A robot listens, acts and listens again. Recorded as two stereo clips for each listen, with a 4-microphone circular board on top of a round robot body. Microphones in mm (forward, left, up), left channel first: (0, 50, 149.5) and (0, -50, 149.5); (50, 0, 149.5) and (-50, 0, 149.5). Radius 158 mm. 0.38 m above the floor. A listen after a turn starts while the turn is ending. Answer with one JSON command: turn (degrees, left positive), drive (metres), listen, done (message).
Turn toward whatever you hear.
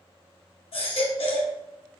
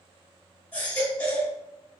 {"turn": 70}
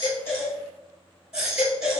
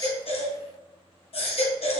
{"done": "Facing the baby crying, 1 to 2 m away."}